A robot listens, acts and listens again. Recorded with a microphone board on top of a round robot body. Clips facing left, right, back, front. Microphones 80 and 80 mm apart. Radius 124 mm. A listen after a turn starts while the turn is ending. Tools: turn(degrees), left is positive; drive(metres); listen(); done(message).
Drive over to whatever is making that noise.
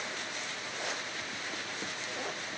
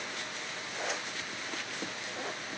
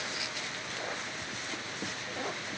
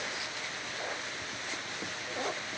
listen()
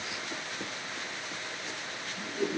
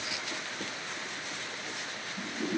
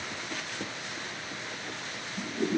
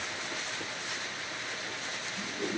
turn(degrees=-155)
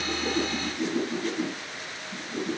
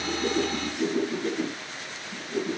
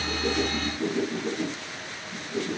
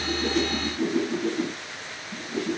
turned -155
drive(metres=1.0)
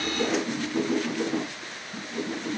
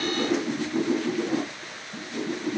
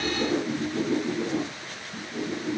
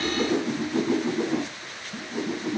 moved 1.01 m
drive(metres=1.0)
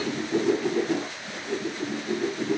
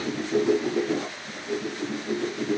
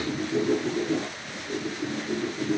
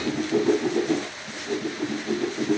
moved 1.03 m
turn(degrees=-10)
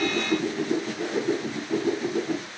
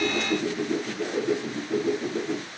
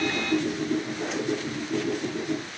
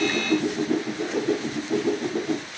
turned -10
drive(metres=1.0)
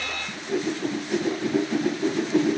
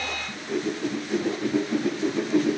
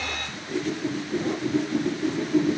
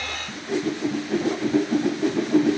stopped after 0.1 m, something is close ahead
done("I am next to the whoosh.")